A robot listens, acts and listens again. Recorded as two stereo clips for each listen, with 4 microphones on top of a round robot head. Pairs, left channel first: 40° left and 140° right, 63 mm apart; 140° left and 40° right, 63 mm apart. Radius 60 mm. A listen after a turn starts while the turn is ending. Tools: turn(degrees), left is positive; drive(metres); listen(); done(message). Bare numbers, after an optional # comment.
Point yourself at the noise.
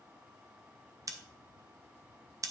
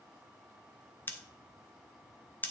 # The scissors: 165° right.
turn(-165)
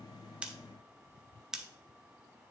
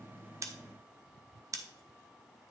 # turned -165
# The scissors is now 60° right.
turn(-60)
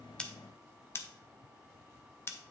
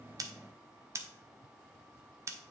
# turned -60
done("Found it: scissors, straight ahead.")